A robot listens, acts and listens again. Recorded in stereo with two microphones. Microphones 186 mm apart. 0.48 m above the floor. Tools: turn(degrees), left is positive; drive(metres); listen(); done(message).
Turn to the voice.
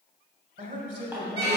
turn(degrees=-50)
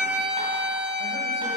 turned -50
listen()
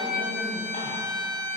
listen()
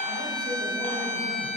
done("I heard a man speaking, but can't make it out now. It was about straight ahead or 80° right.")